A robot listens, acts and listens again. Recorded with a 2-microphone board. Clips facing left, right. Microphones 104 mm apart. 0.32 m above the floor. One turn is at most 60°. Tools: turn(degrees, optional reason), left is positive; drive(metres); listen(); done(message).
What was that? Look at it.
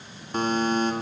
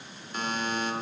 turn(degrees=40, reason="The buzzer: about 40° left or 140° left.")
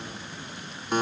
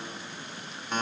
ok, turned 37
turn(degrees=10, reason="So it is at 10° left.")
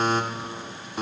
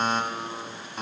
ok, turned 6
done("Facing the buzzer, 1 to 2 m away.")